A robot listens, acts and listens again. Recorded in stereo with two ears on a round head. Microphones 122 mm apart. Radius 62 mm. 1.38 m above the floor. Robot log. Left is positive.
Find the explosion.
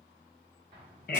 note: The explosion: about 35° right or 145° right.
cmd yaw -35
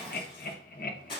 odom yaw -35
cmd idle
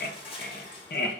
end: I heard an explosion, but can't make it out now. It was about straight ahead or 110° right.